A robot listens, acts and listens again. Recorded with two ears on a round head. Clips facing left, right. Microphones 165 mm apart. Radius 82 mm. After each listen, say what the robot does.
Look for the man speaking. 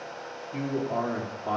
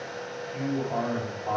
Turn 45° left.
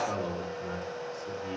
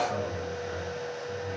Turn 80° left.
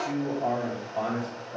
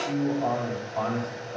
Turn 15° left.
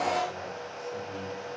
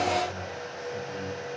Turn 10° left.
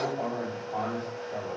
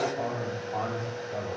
Facing the man speaking.